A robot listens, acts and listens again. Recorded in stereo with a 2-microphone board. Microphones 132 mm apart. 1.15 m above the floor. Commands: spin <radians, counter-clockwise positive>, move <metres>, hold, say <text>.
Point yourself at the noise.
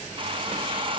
spin -0.70
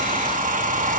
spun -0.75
spin -1.75
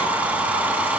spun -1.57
spin -0.17
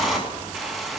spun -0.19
say Found it: a hair dryer, straight ahead, 1 to 2 m away.